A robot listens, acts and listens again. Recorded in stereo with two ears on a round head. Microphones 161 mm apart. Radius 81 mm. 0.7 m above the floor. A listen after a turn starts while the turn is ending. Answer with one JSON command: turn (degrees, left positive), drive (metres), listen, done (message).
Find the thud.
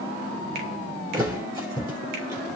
{"turn": -25}
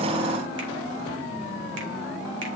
{"listen": true}
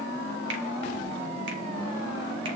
{"done": "I heard a thud, but can't make it out now. It was about straight ahead or 130° right."}